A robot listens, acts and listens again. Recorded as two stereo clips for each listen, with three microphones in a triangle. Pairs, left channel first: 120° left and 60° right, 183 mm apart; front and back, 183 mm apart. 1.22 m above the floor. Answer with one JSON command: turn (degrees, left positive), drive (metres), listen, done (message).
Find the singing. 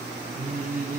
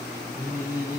{"turn": -100}
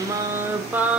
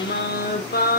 {"turn": 25}
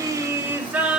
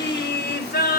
{"turn": 25}
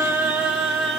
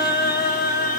{"turn": 30}
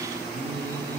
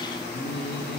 {"turn": 10}
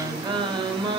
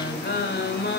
{"done": "Found it: singing, straight ahead."}